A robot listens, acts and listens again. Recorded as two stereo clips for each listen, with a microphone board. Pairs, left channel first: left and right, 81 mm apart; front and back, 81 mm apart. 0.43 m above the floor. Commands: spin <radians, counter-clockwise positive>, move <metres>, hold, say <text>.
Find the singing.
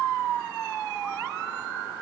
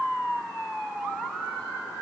hold
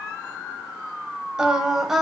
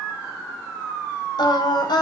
say Facing the singing.